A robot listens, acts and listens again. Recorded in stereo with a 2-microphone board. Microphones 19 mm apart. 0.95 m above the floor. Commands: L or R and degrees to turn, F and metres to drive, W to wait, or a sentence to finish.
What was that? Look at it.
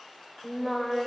L20
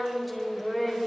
L30
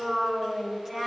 R25
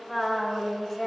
L20
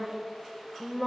Facing the singing.